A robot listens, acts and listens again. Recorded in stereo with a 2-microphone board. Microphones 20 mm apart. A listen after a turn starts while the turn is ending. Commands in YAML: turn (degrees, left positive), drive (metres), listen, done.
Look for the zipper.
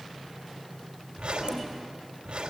turn: -90
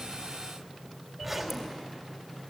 done: "Found it: a zipper, straight ahead."